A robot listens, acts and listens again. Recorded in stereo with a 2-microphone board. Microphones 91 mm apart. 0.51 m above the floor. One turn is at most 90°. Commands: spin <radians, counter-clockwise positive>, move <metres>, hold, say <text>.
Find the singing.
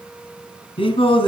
spin 1.57
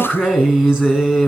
say Facing the singing, 2 to 4 m away.